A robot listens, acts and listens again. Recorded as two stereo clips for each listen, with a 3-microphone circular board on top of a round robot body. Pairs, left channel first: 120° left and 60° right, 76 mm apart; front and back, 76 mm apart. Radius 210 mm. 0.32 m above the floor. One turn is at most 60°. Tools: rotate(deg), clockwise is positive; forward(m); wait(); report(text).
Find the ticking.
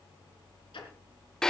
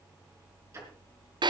rotate(-60)
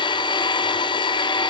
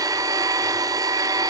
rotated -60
rotate(-60)
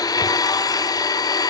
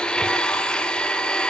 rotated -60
wait()
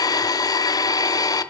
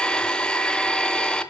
report("I heard ticking from this way, but can't make it out now.")